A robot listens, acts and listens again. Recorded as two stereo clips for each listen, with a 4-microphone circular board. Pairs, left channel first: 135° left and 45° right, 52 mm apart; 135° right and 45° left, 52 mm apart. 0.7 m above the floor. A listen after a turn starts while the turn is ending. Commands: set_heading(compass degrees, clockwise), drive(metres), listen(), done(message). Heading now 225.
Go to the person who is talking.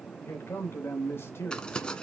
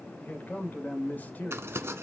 set_heading(55)
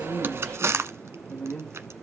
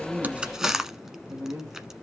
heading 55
set_heading(350)
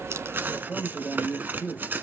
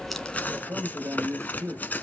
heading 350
set_heading(335)
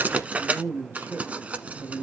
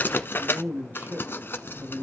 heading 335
drive(1.0)
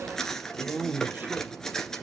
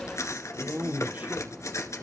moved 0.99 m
drive(1.0)
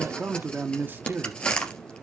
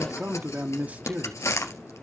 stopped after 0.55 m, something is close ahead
set_heading(345)
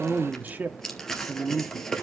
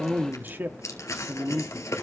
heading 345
done("I am next to the man speaking.")